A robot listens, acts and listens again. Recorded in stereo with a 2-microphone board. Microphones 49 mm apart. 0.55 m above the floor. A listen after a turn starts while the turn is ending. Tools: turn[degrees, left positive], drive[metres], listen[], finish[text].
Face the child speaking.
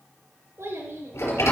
Thought: The child speaking: about 60° right or 120° right.
Action: turn[-60]
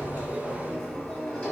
Thought: So it is at 10° left.
Action: turn[10]
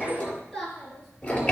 Action: finish[Facing the child speaking.]